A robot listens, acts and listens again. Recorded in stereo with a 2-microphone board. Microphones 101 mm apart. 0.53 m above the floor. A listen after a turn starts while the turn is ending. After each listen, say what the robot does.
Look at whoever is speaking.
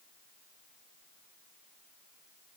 Keep listening.
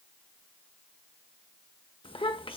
Turn 65° left.
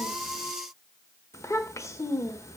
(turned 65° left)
Turn 35° left.
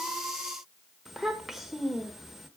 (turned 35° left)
Found it: a child speaking, straight ahead, 1 to 2 m away.